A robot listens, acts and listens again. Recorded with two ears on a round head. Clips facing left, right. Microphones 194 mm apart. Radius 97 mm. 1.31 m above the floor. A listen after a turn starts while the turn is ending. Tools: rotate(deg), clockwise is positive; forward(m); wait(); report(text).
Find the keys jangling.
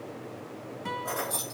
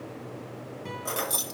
rotate(40)
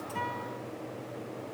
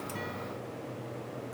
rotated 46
wait()
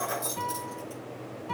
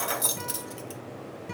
rotate(95)
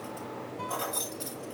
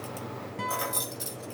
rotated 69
rotate(25)
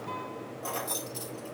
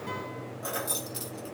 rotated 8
rotate(15)
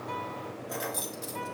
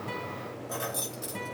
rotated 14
report("Facing the keys jangling, 1 to 2 m away.")